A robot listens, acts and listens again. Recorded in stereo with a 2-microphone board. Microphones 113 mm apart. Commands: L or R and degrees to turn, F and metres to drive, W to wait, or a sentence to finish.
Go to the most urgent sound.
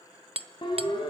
L45
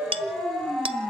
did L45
F1.0
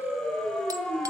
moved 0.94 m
F1.0
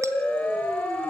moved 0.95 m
L15
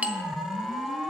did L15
F1.0
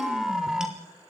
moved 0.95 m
F1.0
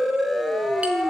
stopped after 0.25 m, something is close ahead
I am next to the siren.